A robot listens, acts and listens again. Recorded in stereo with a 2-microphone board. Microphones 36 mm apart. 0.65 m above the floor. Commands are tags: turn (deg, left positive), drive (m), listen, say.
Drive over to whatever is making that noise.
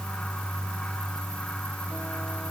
<listen/>
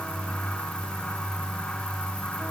<listen/>
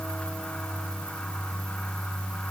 <say>I can't make out anything to turn to.</say>